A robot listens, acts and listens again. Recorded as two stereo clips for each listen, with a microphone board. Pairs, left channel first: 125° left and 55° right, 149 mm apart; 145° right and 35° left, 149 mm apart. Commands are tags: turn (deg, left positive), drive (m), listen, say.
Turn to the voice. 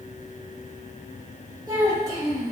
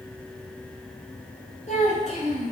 <turn deg="-115"/>
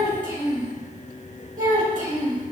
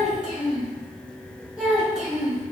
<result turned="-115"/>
<turn deg="-50"/>
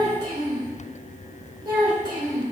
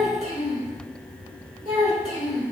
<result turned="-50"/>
<say>Facing the child speaking.</say>